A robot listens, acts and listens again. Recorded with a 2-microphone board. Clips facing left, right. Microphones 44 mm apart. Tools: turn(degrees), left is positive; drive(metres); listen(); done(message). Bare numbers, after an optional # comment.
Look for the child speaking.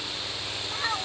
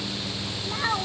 turn(-30)
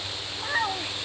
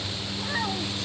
# So it is at 20° left.
turn(20)
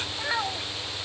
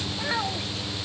done("Found it: a child speaking, straight ahead.")